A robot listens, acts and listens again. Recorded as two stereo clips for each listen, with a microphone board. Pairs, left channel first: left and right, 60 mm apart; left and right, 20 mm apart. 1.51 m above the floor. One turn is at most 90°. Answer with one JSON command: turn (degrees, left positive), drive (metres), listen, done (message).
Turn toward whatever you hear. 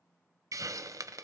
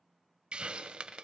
{"turn": -65}
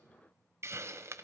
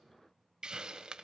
{"turn": -50}
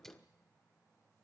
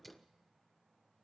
{"listen": true}
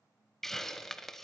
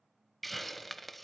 {"done": "Found it: a hiss, straight ahead, under 1 m away."}